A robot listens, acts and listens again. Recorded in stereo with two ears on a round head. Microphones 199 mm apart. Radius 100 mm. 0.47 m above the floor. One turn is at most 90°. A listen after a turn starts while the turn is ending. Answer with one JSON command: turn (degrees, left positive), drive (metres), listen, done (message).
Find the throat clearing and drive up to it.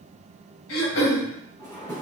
{"turn": 70}
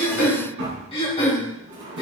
{"turn": 30}
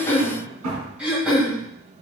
{"drive": 1.0}
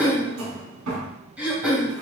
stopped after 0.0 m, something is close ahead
{"done": "Blocked. The throat clearing is further on, straight ahead."}